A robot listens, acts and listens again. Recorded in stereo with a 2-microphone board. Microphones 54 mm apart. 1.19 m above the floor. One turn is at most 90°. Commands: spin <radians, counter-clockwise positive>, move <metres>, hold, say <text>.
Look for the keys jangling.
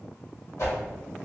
hold
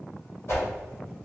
hold
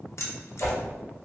spin 1.05
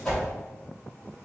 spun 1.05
hold
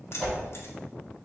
spin 0.96
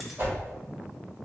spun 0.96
hold
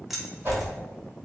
say Facing the keys jangling.